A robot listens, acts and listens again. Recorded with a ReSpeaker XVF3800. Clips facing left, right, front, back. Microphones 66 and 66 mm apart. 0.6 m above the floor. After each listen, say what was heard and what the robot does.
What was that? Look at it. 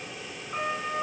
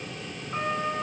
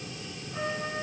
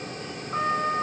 The trumpet: 175° right. Turn 175° right.
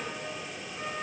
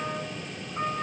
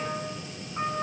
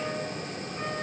The trumpet is now 50° right. Turn 50° right.
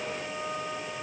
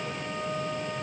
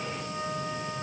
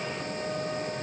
The trumpet is now 10° right. Turn 10° right.
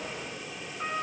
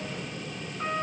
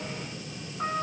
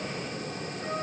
Facing the trumpet, 2 to 4 m away.